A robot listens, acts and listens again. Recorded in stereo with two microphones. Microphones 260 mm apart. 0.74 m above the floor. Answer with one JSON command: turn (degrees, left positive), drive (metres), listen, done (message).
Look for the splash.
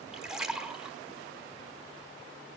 {"turn": 30}
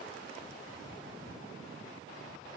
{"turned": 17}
{"listen": true}
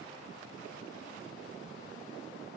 {"done": "I heard a splash, but can't make it out now. It was about 20° right or 165° left."}